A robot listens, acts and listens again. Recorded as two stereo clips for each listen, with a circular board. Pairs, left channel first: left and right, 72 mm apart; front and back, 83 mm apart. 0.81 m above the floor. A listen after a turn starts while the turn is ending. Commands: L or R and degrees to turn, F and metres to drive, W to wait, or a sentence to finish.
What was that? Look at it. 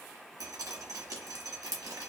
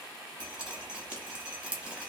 R105
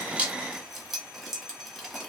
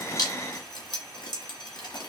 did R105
Found it: dripping, straight ahead.